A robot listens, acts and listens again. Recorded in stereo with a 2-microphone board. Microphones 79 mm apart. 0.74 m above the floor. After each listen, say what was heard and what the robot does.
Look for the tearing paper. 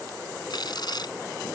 The tearing paper: about 60° left or 120° left. Turn 60° left.
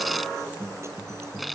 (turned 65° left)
Facing the tearing paper.